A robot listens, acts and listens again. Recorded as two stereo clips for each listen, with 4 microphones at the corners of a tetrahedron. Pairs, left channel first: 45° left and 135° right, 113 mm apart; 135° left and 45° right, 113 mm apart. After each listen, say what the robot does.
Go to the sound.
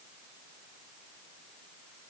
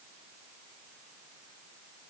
Keep listening.
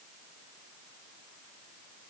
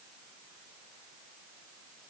Keep listening.
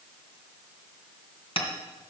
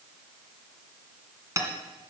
Turn 15° left.
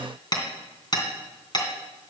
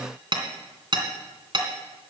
Drive 1.0 m forward.
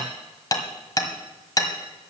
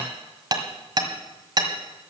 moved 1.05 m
Drive 1.0 m forward.
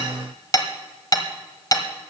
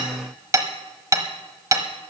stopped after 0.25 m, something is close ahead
Arrived at the hammering, straight ahead.